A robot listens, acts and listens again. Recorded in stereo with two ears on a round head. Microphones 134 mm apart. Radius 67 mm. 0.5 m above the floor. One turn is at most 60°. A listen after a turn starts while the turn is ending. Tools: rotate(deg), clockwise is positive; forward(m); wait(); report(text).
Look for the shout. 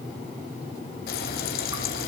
wait()
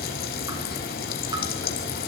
wait()
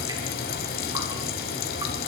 report("I can't make out a shout, only frying.")